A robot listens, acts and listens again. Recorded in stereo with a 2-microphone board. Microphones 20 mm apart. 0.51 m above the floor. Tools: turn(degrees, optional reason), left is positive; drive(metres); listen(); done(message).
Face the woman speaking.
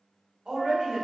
turn(degrees=-55, reason="The woman speaking: about 55° right or 125° right.")
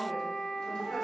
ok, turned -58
listen()
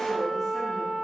listen()
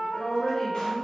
turn(degrees=40, reason="So it is at 40° left.")
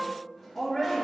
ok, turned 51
turn(degrees=30, reason="The woman speaking is now 30° left.")
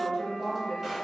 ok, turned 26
turn(degrees=10, reason="The woman speaking is now 10° left.")
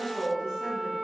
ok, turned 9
done("Found it: a woman speaking, straight ahead, 1 to 2 m away.")